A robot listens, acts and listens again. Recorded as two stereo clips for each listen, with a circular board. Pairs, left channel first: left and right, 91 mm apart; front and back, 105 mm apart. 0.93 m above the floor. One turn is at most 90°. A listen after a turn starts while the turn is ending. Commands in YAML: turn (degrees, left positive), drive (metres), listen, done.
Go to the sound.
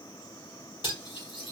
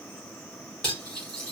turn: 85
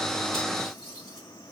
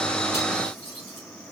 drive: 1.0
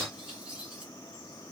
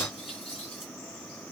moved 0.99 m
turn: -10
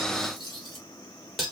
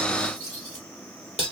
drive: 1.0
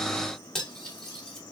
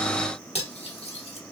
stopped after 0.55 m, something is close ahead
done: "I am next to the cutlery clinking."